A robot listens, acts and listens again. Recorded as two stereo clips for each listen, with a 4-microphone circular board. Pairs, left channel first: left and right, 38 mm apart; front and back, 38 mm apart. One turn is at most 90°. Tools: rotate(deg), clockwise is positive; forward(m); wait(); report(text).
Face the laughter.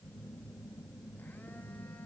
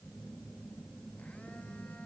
wait()
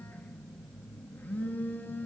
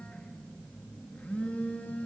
wait()
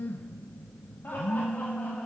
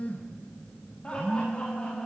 rotate(-60)
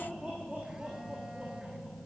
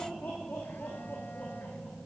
rotate(30)
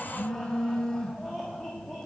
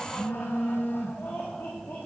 rotate(-10)
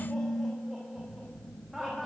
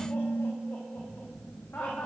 report("Facing the laughter, 2 to 4 m away.")